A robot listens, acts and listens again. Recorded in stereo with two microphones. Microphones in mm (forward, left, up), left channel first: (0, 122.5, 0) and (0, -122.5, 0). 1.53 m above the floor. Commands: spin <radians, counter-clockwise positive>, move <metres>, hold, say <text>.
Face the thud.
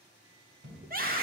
spin -0.96
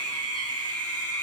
hold
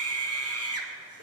say I heard a thud, but can't make it out now. It was about straight ahead or 70° right.